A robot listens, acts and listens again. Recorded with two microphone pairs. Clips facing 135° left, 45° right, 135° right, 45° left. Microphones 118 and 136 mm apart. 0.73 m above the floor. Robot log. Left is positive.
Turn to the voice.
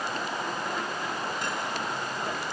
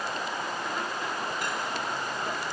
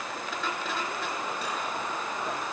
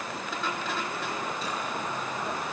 cmd idle
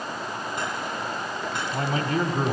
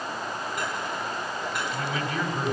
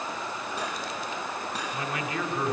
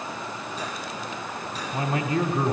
note: The man speaking: 95° left.
cmd yaw +95
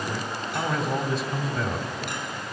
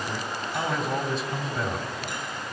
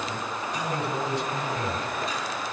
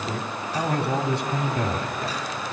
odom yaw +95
note: The man speaking is now 45° left.
cmd yaw +45
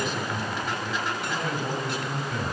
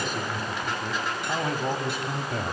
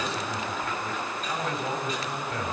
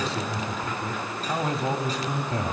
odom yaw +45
note: The man speaking is now 10° right.
cmd yaw -10
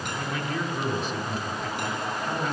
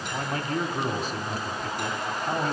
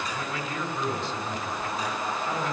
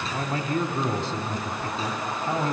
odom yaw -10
end: Found it: a man speaking, straight ahead.